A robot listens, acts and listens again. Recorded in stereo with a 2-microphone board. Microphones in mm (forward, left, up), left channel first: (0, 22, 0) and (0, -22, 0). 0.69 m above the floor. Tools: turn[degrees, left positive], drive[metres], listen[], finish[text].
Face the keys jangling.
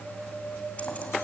Action: listen[]
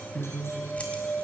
Thought: The keys jangling: about 30° left or 150° left.
Action: turn[30]
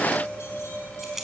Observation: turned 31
Action: finish[Facing the keys jangling, 2 to 4 m away.]